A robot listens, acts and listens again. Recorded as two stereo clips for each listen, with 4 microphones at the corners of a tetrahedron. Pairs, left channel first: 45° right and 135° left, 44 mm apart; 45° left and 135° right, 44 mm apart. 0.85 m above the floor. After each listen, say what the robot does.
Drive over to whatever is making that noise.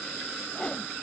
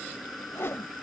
Turn 20° left.
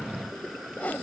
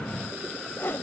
Drive 1.0 m forward.
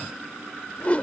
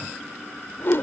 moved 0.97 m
Turn 10° left.
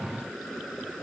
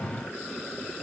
Keep listening.
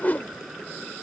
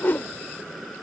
Drive 1.0 m forward.
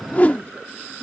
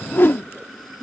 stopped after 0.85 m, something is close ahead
Turn 10° left.
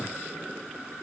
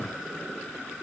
Keep listening.
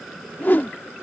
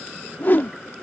I am next to the whoosh.